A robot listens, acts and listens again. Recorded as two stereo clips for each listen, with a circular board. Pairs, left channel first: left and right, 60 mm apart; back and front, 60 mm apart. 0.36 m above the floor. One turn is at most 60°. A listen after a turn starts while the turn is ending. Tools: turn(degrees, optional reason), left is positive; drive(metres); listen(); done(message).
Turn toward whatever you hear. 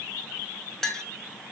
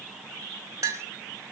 turn(degrees=10, reason="The clink: 10° left.")
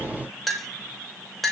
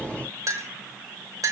done("Found it: a clink, straight ahead, 1 to 2 m away.")